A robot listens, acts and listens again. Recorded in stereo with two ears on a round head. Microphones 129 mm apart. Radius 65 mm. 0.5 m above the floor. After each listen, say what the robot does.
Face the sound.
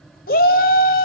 Turn 65° left.
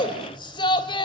Turn 35° left.
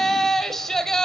Found it: a shout, straight ahead, 2 to 4 m away.